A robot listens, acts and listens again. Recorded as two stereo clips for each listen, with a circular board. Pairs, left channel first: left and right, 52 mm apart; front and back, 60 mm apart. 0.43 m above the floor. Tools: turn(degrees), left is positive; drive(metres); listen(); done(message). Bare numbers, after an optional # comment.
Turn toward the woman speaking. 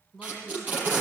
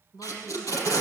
# The woman speaking: 10° left.
turn(10)
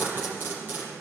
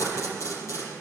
listen()
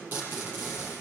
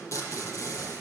listen()
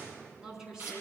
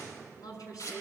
# The woman speaking is now 15° right.
turn(-15)
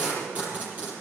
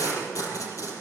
listen()
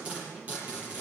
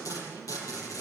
listen()
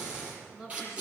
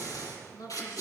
# The woman speaking is now 10° right.
turn(-10)
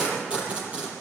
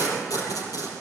listen()
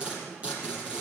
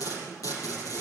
listen()
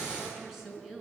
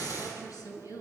done("Facing the woman speaking, over 4 m away.")